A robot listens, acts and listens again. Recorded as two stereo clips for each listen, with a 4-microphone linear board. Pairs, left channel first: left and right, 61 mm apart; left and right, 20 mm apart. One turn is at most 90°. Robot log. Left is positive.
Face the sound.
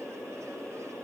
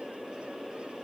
cmd idle
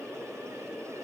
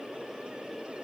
cmd idle
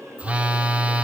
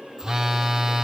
note: The phone buzzing: about 25° right or 155° right.
cmd yaw -25
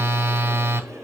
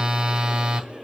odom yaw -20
note: So it is at 135° right.
cmd yaw -90
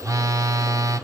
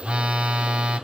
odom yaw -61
note: The phone buzzing is now 75° right.
cmd yaw -75
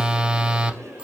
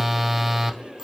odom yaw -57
note: The phone buzzing is now 15° right.
cmd yaw -15
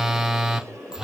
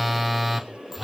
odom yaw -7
note: The phone buzzing is now 10° right.
cmd yaw -10
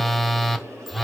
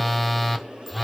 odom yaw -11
end: Facing the phone buzzing.